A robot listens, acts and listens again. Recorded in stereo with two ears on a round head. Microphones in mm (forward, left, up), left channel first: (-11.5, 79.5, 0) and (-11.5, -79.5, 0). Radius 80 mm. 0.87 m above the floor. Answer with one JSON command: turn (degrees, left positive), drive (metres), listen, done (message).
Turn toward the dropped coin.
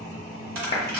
{"turn": -55}
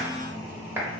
{"listen": true}
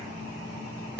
{"done": "I heard a dropped coin, but can't make it out now. It was about straight ahead or 70° right."}